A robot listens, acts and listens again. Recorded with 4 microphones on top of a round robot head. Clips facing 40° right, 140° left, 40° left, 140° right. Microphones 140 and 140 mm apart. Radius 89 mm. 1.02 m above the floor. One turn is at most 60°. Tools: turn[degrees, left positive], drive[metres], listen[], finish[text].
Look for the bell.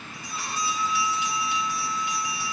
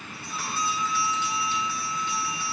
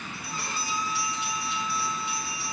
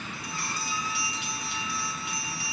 Thought: The bell: 115° right.
Action: turn[-60]
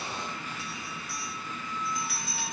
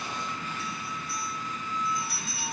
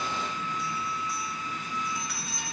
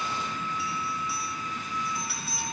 Thought: The bell is now 55° right.
Action: turn[-55]
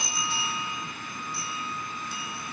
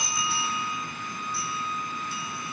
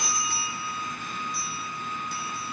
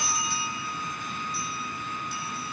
Action: finish[Facing the bell, over 4 m away.]